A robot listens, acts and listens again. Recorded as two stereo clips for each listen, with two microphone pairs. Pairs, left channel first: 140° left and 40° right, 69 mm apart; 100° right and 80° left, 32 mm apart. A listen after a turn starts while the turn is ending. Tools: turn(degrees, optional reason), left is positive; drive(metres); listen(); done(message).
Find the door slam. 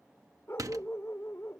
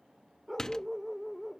turn(degrees=-35, reason="The door slam: 35° right.")
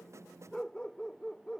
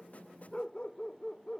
done("I heard a door slam from this way, but can't make it out now.")